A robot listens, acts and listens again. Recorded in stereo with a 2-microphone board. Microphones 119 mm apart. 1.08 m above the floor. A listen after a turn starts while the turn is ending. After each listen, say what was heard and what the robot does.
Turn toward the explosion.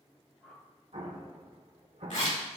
The explosion: about 65° right or 115° right. Turn 65° right.
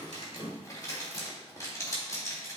Keep listening.
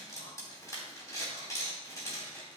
I heard an explosion, but can't make it out now. It was about straight ahead or 50° right.